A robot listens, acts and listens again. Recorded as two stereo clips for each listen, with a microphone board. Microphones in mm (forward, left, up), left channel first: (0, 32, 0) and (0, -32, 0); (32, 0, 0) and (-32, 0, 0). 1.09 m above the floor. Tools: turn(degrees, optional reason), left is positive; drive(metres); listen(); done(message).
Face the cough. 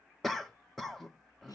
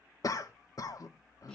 done("Facing the cough.")